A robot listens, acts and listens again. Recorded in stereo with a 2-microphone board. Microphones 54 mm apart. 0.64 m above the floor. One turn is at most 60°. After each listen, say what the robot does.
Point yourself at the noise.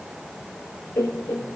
Turn 60° left.
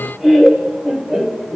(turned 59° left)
Facing the laughter, 2 to 4 m away.